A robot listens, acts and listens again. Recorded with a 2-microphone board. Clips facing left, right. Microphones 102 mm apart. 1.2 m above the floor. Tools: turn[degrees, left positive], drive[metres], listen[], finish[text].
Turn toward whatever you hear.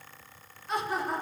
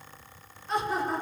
Action: turn[30]
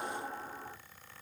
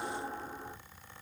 Thought: So it is at 25° right.
Action: turn[-25]
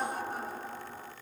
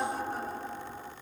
Thought: The laughter is now 20° left.
Action: turn[20]
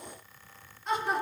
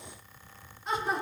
Action: finish[Found it: laughter, straight ahead.]